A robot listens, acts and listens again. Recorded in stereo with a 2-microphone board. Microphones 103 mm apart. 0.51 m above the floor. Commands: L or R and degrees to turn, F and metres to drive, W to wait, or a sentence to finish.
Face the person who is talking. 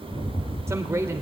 R25
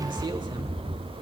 W
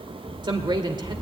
R125
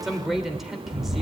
Found it: a man speaking, straight ahead, 1 to 2 m away.